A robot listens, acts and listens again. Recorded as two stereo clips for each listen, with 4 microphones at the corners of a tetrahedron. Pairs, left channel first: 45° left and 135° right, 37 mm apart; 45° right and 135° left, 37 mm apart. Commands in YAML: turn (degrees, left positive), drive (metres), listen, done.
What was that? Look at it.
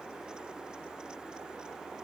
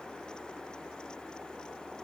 listen: true
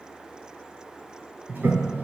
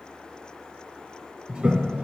turn: -170
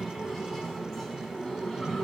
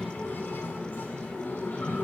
turn: -35
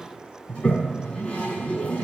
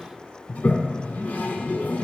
turn: -10
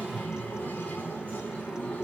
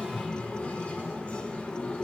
done: "Found it: a toilet flushing, straight ahead, 1 to 2 m away."